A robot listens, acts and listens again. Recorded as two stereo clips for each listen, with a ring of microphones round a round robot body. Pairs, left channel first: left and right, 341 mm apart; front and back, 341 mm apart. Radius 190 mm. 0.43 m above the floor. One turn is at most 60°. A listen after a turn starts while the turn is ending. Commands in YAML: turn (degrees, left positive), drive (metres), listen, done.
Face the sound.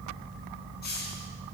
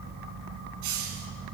turn: 60
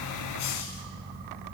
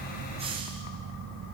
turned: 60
turn: 60
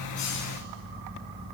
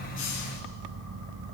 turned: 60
turn: 45
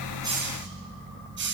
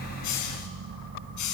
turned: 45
turn: -35
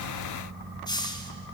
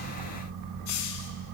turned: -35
turn: 10
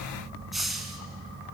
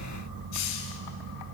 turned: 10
done: "Found it: a hiss, straight ahead."